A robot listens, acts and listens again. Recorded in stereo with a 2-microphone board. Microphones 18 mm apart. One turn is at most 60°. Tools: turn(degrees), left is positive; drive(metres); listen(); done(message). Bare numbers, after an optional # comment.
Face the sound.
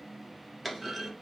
turn(30)
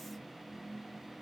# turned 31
listen()
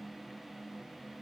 done("I heard a clunk, but can't make it out now. It was about 25° right or 140° left.")